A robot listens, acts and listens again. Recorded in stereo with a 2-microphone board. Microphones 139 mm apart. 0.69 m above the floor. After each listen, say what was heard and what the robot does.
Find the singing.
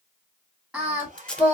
Turn 30° right.
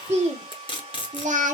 So it is at 115° right. Turn 115° right.
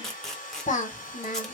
The singing is now 70° left. Turn 70° left.
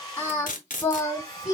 The singing is now 25° left. Turn 25° left.
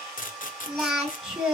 Found it: singing, straight ahead.